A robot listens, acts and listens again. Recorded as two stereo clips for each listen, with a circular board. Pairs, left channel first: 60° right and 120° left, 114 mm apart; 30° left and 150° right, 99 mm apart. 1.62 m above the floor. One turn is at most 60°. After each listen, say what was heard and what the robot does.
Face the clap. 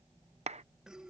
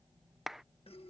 The clap: 125° left. Turn 60° left.
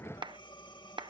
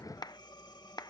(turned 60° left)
The clap is now 75° left. Turn 60° left.
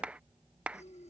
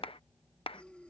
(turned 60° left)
The clap is now 40° left. Turn 40° left.
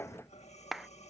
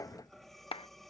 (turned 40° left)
The clap is now 30° left. Turn 30° left.
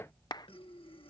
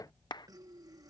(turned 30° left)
The clap is now 10° right. Turn 10° right.
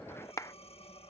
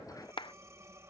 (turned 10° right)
Facing the clap.